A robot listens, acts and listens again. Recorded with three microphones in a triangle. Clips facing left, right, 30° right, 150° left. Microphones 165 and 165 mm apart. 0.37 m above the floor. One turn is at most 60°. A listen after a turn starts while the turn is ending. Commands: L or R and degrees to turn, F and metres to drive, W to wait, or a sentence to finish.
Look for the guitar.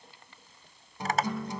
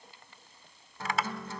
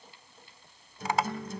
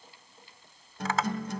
L60
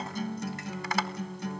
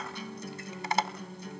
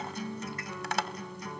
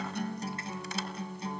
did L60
L60
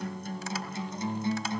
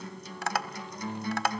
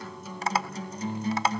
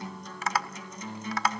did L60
L25
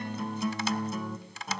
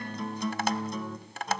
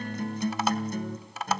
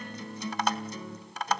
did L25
Found it: a guitar, straight ahead.